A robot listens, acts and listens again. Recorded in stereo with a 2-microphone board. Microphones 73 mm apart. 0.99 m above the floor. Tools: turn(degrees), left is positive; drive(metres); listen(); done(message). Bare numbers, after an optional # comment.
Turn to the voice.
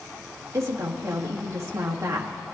# The woman speaking: about 40° right or 140° right.
turn(-40)
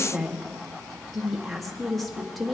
done("Facing the woman speaking.")